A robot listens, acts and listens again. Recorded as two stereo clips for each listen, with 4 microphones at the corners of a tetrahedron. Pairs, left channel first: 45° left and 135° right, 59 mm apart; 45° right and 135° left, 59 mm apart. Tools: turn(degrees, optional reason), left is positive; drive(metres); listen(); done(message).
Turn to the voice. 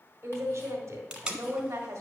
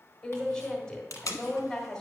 turn(degrees=-120, reason="The woman speaking: 120° right.")
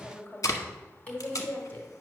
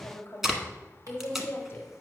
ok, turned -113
done("Found it: a woman speaking, straight ahead, 1 to 2 m away.")